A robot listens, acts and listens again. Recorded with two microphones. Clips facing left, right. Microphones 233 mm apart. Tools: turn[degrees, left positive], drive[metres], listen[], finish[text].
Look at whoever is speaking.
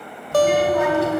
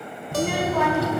Thought: The child speaking: about 65° right or 115° right.
Action: turn[-65]
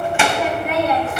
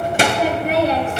Thought: So it is at 25° right.
Action: turn[-25]
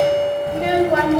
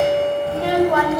Thought: The child speaking is now 30° left.
Action: turn[30]
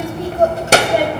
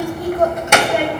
Thought: The child speaking is now 45° left.
Action: turn[45]
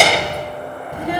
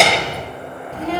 Thought: The child speaking is now 15° left.
Action: turn[15]
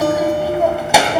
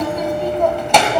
Action: finish[Found it: a child speaking, straight ahead.]